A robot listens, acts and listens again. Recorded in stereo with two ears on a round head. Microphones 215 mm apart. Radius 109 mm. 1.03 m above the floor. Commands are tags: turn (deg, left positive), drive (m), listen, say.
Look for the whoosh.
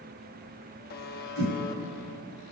<turn deg="-60"/>
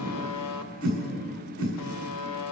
<turn deg="-60"/>
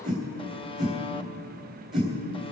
<say>Found it: a whoosh, straight ahead.</say>